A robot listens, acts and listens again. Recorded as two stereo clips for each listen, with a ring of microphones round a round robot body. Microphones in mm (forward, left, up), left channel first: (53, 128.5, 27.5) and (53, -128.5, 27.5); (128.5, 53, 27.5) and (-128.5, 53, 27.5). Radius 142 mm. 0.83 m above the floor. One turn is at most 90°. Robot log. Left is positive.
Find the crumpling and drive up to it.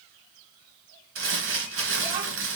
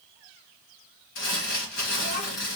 note: The crumpling: 55° right.
cmd yaw -55
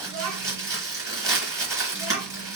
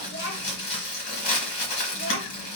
note: The crumpling is now 10° right.
cmd yaw -10
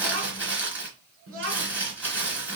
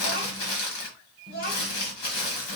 cmd fwd 1.0
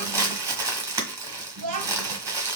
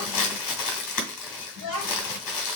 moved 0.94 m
note: The crumpling is now 10° right.
cmd yaw -10
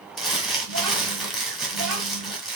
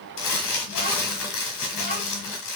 cmd fwd 1.0
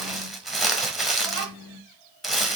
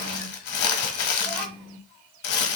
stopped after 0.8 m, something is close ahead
end: Arrived at the crumpling, straight ahead.